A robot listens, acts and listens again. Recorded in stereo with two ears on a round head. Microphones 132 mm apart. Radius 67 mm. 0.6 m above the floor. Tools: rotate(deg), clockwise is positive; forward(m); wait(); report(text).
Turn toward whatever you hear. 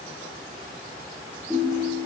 rotate(30)
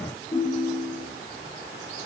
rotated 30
rotate(-25)
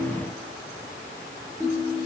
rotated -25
report("Facing the ringtone.")